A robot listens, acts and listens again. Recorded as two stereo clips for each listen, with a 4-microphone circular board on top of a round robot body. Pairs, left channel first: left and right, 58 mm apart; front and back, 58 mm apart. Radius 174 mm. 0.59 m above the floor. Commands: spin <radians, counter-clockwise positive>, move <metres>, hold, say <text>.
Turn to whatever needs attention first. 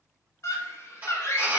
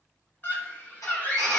spin 0.96
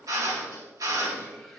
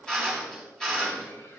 hold
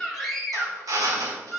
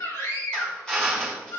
say Facing the scream.